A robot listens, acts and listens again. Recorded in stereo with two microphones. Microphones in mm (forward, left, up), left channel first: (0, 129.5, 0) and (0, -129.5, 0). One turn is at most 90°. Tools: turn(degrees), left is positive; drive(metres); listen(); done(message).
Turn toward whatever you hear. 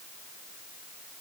listen()
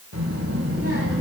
turn(degrees=-65)
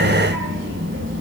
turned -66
turn(degrees=-50)
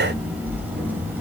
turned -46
done("Facing the child speaking, over 4 m away.")